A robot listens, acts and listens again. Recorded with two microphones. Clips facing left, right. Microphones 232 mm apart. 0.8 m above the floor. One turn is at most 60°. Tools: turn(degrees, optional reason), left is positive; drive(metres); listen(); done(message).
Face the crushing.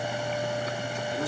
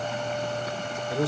listen()
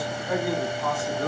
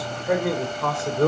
listen()
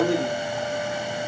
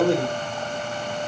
done("I can't make out crushing to turn to.")